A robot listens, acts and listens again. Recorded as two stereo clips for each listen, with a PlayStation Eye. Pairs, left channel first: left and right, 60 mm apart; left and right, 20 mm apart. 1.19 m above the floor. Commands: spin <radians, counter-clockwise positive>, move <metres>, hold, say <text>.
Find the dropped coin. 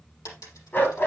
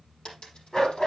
spin 1.57
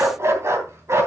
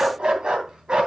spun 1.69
say Facing where the dropped coin came from. I can't hear it now.